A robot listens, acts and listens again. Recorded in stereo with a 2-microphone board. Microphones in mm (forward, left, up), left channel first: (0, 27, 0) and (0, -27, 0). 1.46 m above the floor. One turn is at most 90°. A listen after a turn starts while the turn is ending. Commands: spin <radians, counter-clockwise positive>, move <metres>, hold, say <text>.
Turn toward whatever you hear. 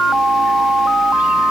hold
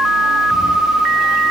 hold
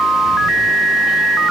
say I can't make out anything.